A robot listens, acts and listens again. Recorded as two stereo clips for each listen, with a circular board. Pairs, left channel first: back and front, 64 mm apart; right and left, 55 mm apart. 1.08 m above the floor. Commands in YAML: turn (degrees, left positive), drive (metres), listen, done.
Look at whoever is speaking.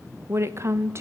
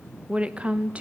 turn: 30
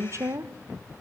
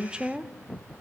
turn: 20
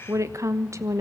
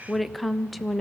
done: "Facing the woman speaking, 1 to 2 m away."